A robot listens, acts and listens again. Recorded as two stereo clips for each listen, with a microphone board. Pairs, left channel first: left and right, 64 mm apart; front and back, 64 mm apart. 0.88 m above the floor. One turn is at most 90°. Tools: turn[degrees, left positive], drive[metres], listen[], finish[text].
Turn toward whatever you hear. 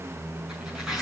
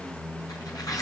Thought: The tearing paper: 10° right.
Action: turn[-10]
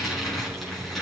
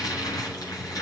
Action: finish[Found it: tearing paper, straight ahead.]